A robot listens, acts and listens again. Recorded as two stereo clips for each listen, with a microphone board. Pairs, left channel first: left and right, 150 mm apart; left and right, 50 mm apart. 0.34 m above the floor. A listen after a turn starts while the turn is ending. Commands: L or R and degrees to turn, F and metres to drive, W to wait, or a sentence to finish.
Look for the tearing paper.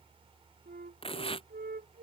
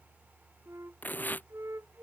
L40
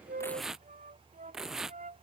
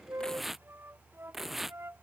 Facing the tearing paper.